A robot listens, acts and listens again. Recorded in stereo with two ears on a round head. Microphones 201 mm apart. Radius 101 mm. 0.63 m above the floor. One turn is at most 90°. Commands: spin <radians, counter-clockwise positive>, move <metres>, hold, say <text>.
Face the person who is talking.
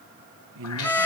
spin -1.13
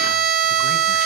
hold
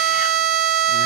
hold
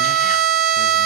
say I heard a man speaking, but can't make it out now. It was about straight ahead or 50° right.